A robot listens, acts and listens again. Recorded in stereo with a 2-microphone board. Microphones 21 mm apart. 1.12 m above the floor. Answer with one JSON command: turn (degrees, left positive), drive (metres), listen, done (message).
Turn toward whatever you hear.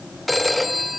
{"turn": 30}
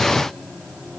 {"listen": true}
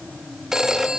{"turn": -30}
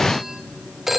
{"turn": -15}
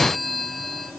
{"done": "Found it: a phone ringing, straight ahead."}